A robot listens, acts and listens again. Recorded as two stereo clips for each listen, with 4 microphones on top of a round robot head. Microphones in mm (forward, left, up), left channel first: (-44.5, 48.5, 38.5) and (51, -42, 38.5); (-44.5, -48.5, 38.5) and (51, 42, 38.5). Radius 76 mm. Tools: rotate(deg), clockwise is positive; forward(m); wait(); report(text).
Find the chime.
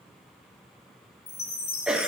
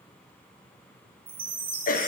rotate(-95)
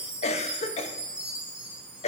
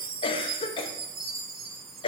rotate(-40)
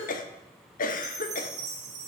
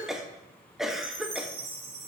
report("Found it: a chime, straight ahead.")